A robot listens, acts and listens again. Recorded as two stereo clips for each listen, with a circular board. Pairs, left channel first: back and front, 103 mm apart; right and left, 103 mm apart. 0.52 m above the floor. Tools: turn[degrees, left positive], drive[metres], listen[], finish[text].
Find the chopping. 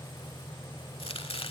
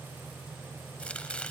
Thought: The chopping: 170° right.
Action: turn[-170]
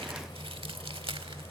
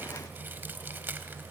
Thought: The chopping is now 20° left.
Action: turn[20]
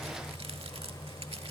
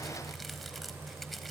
Action: listen[]
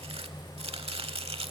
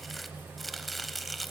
Action: finish[Found it: chopping, straight ahead.]